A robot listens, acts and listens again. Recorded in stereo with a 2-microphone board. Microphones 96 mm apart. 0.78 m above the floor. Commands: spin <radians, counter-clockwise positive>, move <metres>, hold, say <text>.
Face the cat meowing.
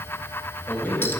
hold
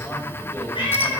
spin 0.96
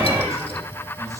hold
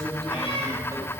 spin 1.22
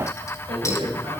hold
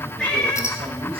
spin 0.17
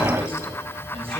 hold
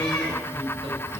hold
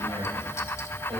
say Facing where the cat meowing came from. I can't hear it now.